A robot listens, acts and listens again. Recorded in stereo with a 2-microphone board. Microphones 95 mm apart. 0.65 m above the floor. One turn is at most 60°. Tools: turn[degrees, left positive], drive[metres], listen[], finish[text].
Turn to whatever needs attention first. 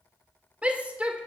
Action: turn[-30]
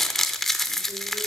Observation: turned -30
Action: listen[]
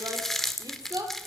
Thought: So it is at 135° right.
Action: turn[-60]
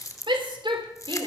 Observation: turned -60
Thought: The shout is now 100° right.
Action: turn[-60]
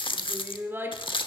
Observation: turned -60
Thought: The shout is now 25° right.
Action: turn[-25]
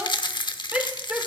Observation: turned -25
Thought: The shout is now 15° right.
Action: turn[-15]
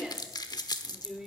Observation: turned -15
Action: finish[Facing the shout.]